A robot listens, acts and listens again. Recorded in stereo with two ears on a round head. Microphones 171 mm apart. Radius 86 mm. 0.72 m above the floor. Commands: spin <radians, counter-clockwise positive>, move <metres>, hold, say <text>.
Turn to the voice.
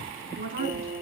spin -0.79
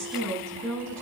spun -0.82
say Found it: a woman speaking, straight ahead.